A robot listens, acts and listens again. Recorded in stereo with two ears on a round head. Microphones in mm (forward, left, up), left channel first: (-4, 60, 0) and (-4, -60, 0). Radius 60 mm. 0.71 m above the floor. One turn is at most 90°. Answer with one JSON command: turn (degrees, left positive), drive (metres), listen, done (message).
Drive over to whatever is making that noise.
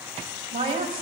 {"turn": -40}
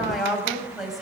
{"drive": 1.0}
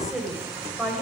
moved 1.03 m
{"drive": 1.0}
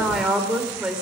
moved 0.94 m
{"drive": 1.0}
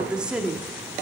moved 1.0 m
{"turn": -10}
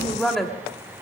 {"drive": 1.0}
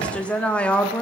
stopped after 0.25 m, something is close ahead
{"turn": 10}
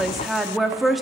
{"done": "Arrived at the woman speaking, straight ahead."}